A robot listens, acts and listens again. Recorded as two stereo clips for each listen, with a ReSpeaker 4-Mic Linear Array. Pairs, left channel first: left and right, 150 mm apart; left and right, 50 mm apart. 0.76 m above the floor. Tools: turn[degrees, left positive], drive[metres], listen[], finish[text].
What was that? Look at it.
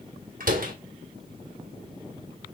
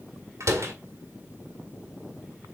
Thought: The door slam: about 70° right or 110° right.
Action: turn[-70]
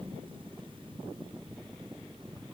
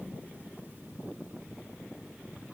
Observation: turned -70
Action: listen[]
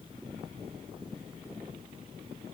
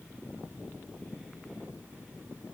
Action: finish[I heard a door slam, but can't make it out now. It was about straight ahead or 40° right.]